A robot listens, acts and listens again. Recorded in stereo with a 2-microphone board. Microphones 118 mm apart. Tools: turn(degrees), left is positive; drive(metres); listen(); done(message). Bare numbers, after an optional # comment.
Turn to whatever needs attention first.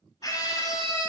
# The scream: about 30° left or 150° left.
turn(30)
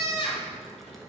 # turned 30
# So it is at 110° left.
turn(110)
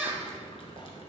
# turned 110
# The scream is now 20° right.
turn(-20)
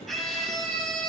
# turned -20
done("Facing the scream.")